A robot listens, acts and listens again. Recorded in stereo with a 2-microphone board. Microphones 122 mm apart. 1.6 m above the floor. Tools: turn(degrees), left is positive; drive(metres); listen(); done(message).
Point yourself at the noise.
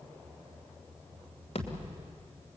turn(degrees=60)
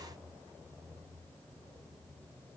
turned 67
listen()
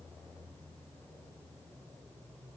done("I heard a thud, but can't make it out now. It was about 10° right or 55° left.")